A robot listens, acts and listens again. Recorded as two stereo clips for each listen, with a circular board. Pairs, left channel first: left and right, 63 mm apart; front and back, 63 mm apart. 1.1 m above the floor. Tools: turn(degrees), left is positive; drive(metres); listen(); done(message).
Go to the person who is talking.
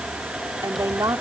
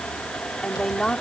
turn(degrees=-85)
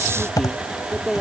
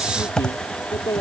drive(metres=1.0)
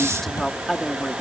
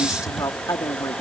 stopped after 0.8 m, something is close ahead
done("Something is in my way. I am facing the woman speaking but have not reached it.")